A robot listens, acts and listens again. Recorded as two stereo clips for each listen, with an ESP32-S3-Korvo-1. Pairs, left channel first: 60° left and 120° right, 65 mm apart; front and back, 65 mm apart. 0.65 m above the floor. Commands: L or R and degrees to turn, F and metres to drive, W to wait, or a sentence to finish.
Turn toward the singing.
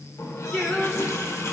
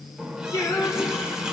R10
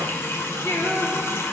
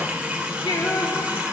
L10
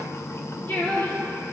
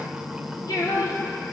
Facing the singing, over 4 m away.